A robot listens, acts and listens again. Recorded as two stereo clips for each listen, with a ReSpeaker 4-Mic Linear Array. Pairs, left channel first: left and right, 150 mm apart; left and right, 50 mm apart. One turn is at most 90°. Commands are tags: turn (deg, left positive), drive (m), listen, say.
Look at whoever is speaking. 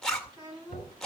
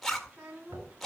<turn deg="-30"/>
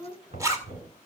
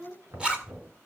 <turn deg="-90"/>
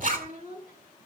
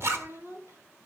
<turn deg="-70"/>
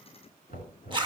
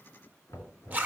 <listen/>
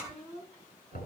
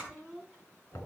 <say>Found it: a child speaking, straight ahead, over 4 m away.</say>